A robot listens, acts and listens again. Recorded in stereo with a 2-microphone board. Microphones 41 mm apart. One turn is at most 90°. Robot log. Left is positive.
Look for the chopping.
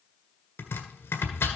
note: The chopping: about 65° left or 115° left.
cmd yaw +65
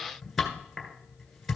end: Found it: chopping, straight ahead, 1 to 2 m away.